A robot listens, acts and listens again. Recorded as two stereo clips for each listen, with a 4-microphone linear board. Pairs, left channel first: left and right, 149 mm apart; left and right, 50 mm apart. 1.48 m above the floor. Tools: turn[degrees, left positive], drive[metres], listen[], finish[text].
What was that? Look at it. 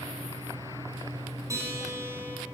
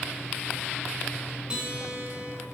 Thought: The guitar: about 20° right or 160° right.
Action: turn[-20]
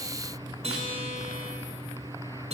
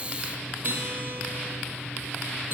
Thought: So it is at 135° right.
Action: turn[-135]
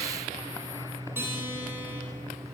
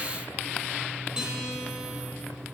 Thought: The guitar is now 15° right.
Action: turn[-15]
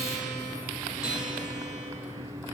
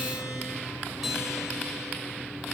Action: finish[Facing the guitar, 2 to 4 m away.]